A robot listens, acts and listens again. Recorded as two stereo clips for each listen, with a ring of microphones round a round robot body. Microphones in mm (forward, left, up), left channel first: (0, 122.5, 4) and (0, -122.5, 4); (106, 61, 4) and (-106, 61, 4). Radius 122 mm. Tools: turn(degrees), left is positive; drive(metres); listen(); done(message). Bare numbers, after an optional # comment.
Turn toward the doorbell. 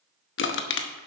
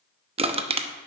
listen()
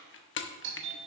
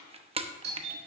# The doorbell: 130° right.
turn(-130)
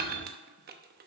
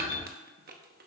listen()
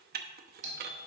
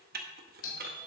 # The doorbell is now 30° right.
turn(-30)
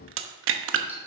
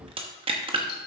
listen()
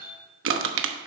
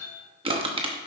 # The doorbell is now 10° right.
turn(-10)
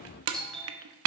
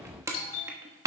done("Facing the doorbell.")